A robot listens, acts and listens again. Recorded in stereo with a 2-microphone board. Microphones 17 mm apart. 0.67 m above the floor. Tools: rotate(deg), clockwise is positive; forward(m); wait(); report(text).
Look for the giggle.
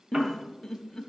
rotate(-25)
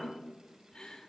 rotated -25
wait()
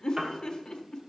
rotate(-130)
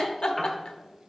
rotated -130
rotate(-60)
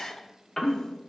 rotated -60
rotate(-40)
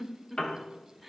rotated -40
rotate(10)
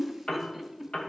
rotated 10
report("Facing the giggle, under 1 m away.")